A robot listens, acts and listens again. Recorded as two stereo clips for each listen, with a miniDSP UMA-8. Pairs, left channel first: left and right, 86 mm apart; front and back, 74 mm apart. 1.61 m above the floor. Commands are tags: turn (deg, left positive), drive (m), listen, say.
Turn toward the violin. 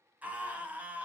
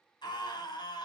<listen/>
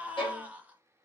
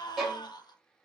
<turn deg="95"/>
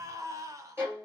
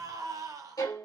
<turn deg="-30"/>
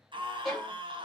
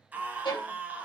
<say>Found it: a violin, straight ahead.</say>